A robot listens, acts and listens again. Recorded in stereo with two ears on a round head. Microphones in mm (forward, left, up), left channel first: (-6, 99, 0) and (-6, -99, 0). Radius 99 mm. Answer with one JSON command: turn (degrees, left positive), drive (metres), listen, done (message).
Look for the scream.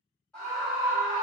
{"turn": 30}
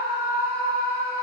{"turn": -25}
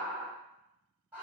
{"turn": -10}
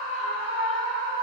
{"done": "Facing the scream."}